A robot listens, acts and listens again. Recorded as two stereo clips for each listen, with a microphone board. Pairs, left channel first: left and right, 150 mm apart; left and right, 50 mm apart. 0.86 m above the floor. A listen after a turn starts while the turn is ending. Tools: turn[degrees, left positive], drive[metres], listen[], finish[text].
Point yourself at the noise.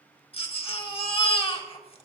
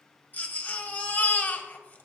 Thought: The baby crying: about 40° left or 140° left.
Action: turn[40]
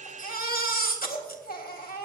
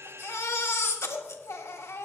Thought: So it is at 95° left.
Action: turn[95]
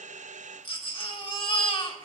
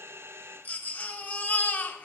Thought: The baby crying is now 35° left.
Action: turn[35]
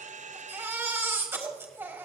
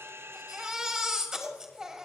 Thought: The baby crying is now 15° right.
Action: turn[-15]
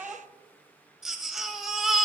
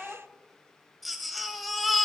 Action: finish[Found it: a baby crying, straight ahead.]